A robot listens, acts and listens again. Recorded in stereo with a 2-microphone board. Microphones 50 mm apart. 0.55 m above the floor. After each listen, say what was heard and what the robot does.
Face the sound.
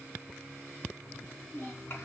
The child speaking: about 50° left or 130° left. Turn 50° left.
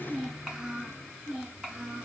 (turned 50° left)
So it is at 20° right. Turn 20° right.
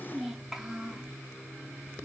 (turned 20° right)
The child speaking is now 20° right. Turn 20° right.
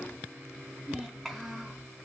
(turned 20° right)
Facing the child speaking.